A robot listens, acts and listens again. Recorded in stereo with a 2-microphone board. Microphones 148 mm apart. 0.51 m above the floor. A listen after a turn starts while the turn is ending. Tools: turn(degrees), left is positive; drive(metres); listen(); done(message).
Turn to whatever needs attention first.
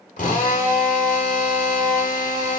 listen()
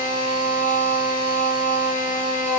listen()
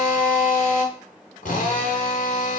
done("I can't make out anything urgent, only a drill.")